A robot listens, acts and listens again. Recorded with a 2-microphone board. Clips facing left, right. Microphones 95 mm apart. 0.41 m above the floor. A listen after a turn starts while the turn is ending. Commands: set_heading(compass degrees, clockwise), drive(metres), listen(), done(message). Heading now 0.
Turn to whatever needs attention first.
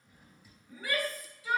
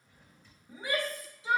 set_heading(25)
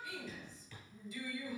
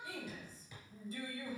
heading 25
set_heading(150)
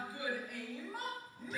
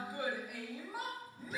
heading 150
done("Found it: a shout, straight ahead, 2 to 4 m away.")